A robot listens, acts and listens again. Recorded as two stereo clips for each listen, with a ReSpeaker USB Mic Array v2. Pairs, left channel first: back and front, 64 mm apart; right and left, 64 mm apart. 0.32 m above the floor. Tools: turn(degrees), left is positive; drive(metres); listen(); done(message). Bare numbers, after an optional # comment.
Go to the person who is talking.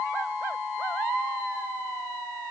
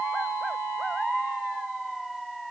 listen()
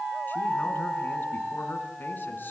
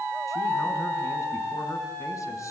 listen()
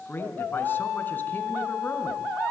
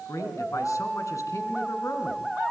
# The man speaking: 120° right.
turn(-120)
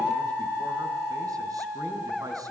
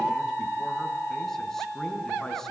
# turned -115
listen()
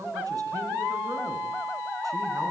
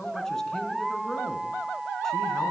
# The man speaking is now 10° right.
turn(-10)
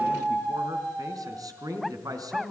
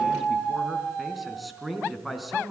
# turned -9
drive(1.0)
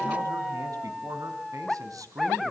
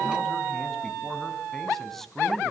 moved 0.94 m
drive(1.0)
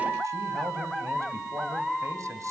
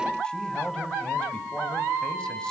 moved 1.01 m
# The man speaking is now 15° right.
turn(-15)
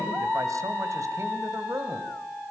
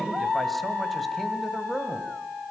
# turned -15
drive(1.0)
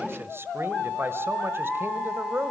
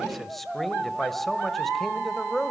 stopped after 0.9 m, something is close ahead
done("I am next to the man speaking.")